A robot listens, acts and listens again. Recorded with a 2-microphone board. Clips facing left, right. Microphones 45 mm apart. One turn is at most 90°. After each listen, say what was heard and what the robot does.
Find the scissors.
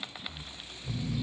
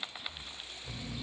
Keep listening.
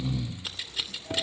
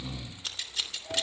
Turn 30° left.
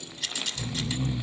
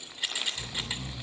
So it is at 20° right. Turn 20° right.
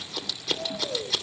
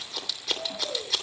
Facing the scissors, 2 to 4 m away.